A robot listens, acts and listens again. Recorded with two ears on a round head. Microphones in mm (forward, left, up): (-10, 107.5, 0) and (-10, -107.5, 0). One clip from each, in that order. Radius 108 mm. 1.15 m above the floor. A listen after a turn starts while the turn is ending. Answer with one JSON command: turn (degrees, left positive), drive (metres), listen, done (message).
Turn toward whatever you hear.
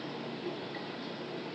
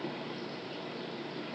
{"listen": true}
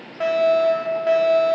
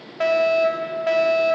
{"turn": -15}
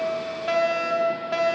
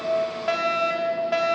{"done": "Found it: a fire alarm, straight ahead."}